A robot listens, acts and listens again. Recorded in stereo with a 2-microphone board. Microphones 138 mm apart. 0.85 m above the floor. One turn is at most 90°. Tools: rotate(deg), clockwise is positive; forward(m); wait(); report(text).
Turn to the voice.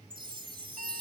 wait()
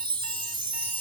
wait()
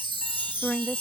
rotate(-30)
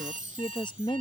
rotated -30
rotate(-90)
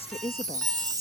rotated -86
rotate(-55)
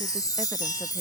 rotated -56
wait()
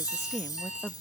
report("Facing the woman speaking.")